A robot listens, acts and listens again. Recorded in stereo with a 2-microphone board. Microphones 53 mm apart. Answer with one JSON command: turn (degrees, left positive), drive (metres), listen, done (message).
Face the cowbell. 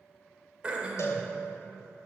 {"turn": 60}
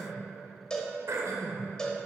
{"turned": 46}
{"turn": 15}
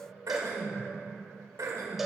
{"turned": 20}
{"done": "Found it: a cowbell, straight ahead."}